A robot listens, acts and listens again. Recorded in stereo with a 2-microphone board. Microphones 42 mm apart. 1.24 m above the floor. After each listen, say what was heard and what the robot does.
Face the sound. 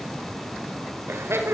Turn 90° right.
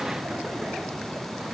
Keep listening.
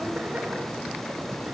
Keep listening.
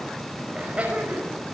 The laughter is now 30° right. Turn 30° right.
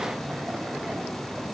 Keep listening.
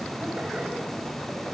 Keep listening.
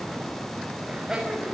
The laughter is now 15° right. Turn 15° right.
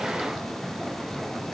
Keep listening.
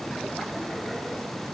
Keep listening.
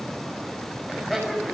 Facing the laughter.